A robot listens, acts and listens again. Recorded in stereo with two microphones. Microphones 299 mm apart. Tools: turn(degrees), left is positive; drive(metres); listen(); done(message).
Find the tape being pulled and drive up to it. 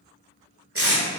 turn(degrees=-50)
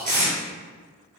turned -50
turn(degrees=-85)
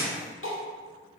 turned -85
listen()
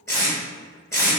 turn(degrees=10)
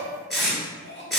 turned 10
drive(metres=1.0)
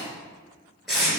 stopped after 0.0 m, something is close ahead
done("Something is in my way. I am facing the tape being pulled but have not reached it.")